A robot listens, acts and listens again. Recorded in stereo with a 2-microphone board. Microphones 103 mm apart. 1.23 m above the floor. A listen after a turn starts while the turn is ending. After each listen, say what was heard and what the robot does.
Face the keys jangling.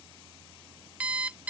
Keep listening.
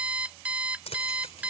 Turn 90° left.
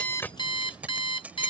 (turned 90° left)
So it is at 15° right. Turn 15° right.
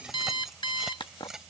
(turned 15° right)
Found it: keys jangling, straight ahead.